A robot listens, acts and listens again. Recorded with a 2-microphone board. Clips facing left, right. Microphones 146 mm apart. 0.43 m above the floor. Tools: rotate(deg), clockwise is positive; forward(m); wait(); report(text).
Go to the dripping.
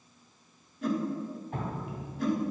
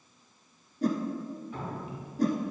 rotate(-55)
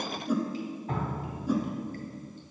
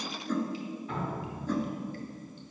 rotate(-50)
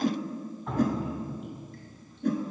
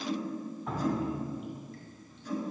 forward(1.0)
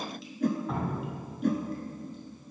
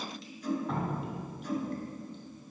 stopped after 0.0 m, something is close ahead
report("Something is in my way. I am facing the dripping but have not reached it.")